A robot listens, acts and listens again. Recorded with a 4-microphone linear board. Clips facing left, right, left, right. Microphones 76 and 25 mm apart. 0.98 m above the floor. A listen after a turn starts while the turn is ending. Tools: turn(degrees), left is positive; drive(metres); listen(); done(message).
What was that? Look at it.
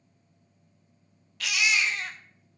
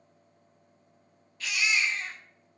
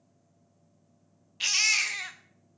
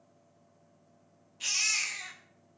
turn(degrees=90)
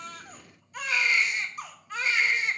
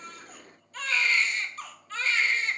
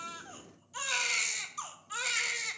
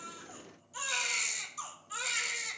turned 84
turn(degrees=15)
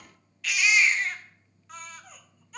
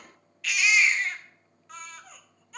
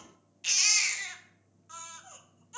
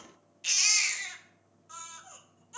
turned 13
done("Found it: a baby crying, straight ahead.")